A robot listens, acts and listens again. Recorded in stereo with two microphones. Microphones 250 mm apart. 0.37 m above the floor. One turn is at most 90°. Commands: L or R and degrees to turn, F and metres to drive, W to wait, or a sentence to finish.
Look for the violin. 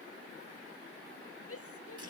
W
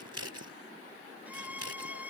R30
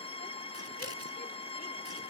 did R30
L25
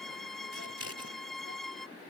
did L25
Found it: a violin, straight ahead.